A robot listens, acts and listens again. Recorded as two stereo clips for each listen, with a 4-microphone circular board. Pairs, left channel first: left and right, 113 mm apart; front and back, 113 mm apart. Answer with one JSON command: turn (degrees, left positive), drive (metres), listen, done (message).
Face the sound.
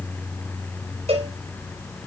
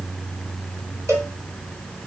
{"turn": -120}
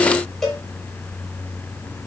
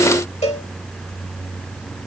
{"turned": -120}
{"done": "Found it: a cowbell, straight ahead."}